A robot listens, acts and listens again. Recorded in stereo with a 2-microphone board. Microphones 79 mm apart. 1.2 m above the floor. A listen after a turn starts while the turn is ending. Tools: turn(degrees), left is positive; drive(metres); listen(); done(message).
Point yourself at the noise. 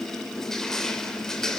turn(degrees=30)
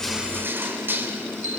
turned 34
turn(degrees=-25)
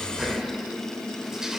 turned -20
listen()
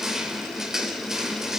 done("Facing the crushing, 2 to 4 m away.")